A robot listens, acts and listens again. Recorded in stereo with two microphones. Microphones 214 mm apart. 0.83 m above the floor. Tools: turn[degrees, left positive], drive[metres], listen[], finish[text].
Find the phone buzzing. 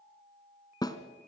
Action: listen[]
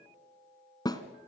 Action: listen[]
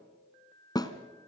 Action: finish[I can't make out a phone buzzing, only a snare drum.]